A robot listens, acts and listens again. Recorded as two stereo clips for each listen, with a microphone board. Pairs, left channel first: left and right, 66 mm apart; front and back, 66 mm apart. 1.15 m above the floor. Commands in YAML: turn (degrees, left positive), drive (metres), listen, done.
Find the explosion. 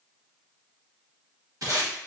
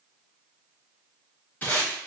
listen: true
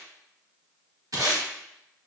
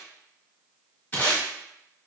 listen: true
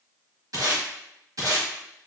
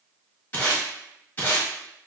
done: "I can't make out an explosion, only tape being pulled."